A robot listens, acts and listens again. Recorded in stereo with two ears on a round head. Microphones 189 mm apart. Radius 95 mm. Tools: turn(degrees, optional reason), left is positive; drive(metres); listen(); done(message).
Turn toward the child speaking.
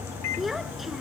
turn(degrees=30)
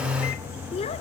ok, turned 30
turn(degrees=150, reason="So it is at 150° left.")
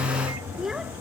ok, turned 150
done("Facing the child speaking.")